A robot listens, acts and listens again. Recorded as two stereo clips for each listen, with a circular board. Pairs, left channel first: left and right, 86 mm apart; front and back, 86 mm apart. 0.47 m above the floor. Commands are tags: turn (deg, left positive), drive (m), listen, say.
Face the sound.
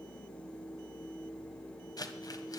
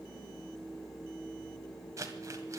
<turn deg="130"/>
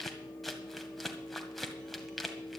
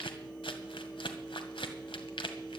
<say>Facing the crumpling, 1 to 2 m away.</say>